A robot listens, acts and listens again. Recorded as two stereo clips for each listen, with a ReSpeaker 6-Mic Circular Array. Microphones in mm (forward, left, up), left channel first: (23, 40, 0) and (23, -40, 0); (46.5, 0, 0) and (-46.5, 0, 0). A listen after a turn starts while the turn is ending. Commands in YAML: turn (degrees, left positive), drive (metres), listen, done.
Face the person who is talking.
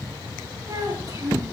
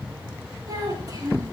turn: -135
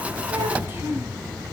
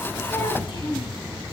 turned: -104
turn: -30
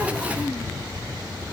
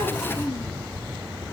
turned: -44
turn: 15
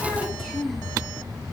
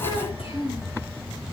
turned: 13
done: "Facing the child speaking."